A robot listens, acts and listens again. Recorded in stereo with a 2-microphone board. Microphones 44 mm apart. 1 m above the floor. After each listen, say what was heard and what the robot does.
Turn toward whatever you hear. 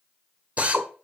The drill: about 30° right or 150° right. Turn 30° right.
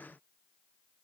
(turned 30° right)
Keep listening.
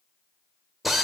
Found it: a drill, straight ahead, 1 to 2 m away.